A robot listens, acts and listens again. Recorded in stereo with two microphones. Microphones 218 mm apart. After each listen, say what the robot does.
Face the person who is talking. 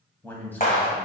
Turn 30° left.
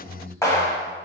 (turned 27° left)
Turn 15° right.
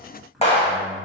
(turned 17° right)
Found it: a man speaking, straight ahead, 1 to 2 m away.